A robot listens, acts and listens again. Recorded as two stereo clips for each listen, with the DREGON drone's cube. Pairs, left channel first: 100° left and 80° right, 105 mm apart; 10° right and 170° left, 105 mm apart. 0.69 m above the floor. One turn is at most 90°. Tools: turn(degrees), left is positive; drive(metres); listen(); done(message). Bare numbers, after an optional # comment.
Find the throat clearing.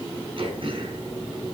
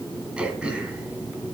# The throat clearing: 110° right.
turn(-90)
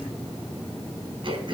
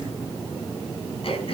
# The throat clearing is now 40° right.
turn(-40)
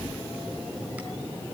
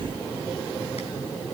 listen()
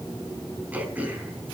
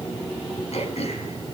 done("Facing the throat clearing, 2 to 4 m away.")